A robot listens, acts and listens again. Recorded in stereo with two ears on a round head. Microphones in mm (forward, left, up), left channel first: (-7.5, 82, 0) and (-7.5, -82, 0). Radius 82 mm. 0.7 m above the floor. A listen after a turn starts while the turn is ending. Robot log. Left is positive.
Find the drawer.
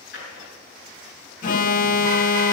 note: The drawer: about 55° left or 125° left.
cmd yaw +55
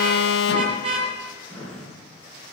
end: Facing the drawer, over 4 m away.